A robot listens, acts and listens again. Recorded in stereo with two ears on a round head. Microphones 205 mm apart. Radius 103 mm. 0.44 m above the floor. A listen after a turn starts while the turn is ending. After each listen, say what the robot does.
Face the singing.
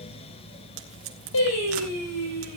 Turn 90° left.
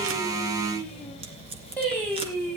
Facing the singing.